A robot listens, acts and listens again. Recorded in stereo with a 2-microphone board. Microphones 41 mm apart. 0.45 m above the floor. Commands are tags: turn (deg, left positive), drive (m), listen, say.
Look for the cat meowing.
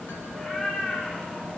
<turn deg="20"/>
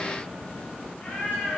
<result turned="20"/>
<turn deg="135"/>
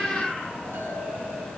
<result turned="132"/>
<say>Found it: a cat meowing, straight ahead, over 4 m away.</say>